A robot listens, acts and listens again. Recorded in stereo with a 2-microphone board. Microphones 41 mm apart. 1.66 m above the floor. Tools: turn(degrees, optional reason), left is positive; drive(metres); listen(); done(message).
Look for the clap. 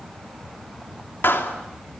turn(degrees=70, reason="The clap: about 70° left or 110° left.")
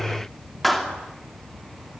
done("Facing the clap.")